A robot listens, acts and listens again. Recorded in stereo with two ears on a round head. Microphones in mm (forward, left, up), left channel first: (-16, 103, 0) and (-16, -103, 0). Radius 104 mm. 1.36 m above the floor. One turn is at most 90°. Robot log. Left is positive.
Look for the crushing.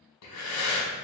cmd idle
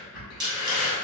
note: The crushing: about 50° right or 130° right.
cmd yaw -50
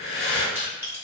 note: So it is at 15° right.
cmd yaw -15
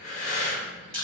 end: Found it: crushing, straight ahead, 2 to 4 m away.